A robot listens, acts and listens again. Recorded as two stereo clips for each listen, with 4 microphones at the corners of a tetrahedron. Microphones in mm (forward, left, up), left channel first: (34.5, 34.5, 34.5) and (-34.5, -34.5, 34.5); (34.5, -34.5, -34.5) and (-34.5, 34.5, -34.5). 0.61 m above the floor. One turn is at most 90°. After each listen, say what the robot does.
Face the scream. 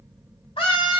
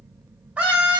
Turn 55° left.
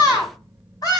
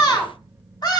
Facing the scream, 2 to 4 m away.